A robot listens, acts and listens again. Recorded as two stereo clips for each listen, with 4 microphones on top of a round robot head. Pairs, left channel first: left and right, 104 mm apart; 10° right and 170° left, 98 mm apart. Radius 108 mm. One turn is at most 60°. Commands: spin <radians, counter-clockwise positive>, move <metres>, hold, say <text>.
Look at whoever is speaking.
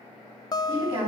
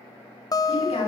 spin -0.70
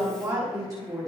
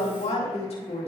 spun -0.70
spin -0.52
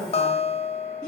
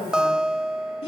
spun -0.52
say Facing the woman speaking, over 4 m away.